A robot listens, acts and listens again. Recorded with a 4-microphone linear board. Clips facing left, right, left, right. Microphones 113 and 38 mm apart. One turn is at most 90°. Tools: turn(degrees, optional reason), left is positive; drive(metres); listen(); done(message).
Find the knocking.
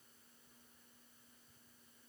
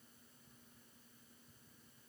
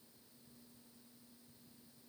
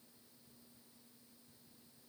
listen()
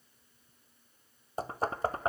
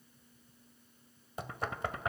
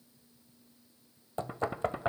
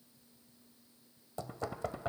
turn(degrees=35, reason="The knocking: about 35° left or 145° left.")
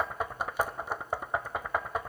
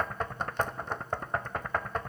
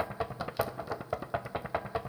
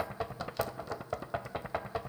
turn(degrees=10, reason="So it is at 10° left.")
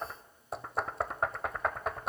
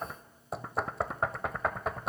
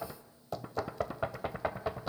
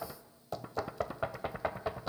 done("Found it: knocking, straight ahead, 1 to 2 m away.")